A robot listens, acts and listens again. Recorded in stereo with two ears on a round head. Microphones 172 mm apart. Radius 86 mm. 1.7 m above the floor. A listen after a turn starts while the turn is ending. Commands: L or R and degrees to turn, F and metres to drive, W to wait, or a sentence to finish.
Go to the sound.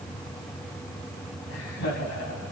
L70
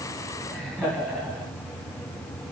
F1.0
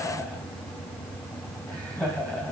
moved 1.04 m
F1.0
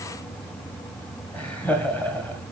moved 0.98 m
L10
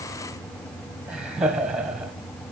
F1.0
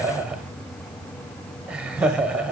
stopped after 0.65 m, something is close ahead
I am next to the laughter.